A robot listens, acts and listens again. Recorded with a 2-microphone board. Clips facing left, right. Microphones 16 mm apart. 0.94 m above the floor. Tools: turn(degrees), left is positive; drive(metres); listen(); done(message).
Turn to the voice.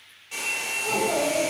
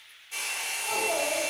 turn(degrees=45)
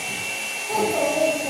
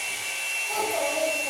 done("Found it: a child speaking, straight ahead, under 1 m away.")